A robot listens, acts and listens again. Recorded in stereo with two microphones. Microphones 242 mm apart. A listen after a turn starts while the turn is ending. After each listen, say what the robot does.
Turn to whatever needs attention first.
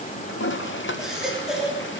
Turn 30° right.
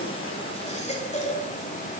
Turn 25° left.
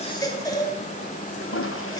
Turn 15° left.
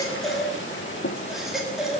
Facing the baby crying, 2 to 4 m away.